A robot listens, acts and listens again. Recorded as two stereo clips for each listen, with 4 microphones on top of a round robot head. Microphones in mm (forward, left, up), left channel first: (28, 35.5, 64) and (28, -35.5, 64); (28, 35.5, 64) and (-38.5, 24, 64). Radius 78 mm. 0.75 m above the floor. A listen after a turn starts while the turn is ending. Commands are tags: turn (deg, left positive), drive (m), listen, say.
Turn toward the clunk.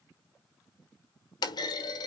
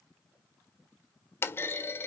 <turn deg="65"/>
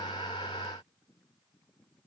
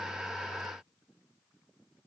<say>I heard a clunk from this way, but can't make it out now.</say>